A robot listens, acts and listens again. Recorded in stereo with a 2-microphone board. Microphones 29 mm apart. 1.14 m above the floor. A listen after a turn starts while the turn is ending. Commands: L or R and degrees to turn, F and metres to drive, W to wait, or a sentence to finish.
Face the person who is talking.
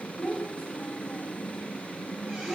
L25
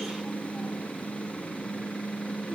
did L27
W
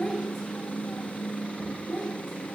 Found it: a child speaking, straight ahead, 2 to 4 m away.